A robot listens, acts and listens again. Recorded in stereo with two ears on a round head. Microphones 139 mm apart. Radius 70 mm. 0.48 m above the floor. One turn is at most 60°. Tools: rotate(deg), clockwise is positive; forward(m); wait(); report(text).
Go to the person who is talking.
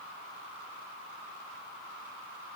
wait()
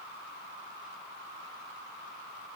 wait()
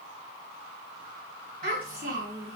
rotate(60)
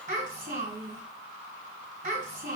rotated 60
rotate(55)
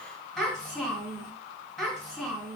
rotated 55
forward(1.0)
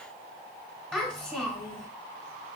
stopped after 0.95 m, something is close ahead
report("Arrived at the child speaking, straight ahead.")